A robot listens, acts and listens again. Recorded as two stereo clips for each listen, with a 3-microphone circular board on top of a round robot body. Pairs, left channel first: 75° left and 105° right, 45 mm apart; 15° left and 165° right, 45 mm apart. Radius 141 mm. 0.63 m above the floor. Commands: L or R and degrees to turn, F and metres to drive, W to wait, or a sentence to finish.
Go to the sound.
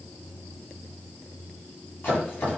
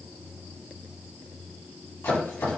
L25
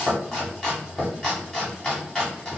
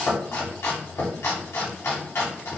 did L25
F1.0
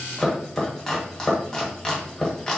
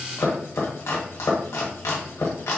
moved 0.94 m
F1.0
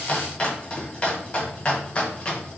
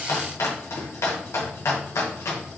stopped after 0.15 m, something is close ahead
L10
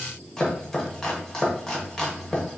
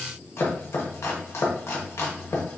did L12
Arrived at the chopping, straight ahead.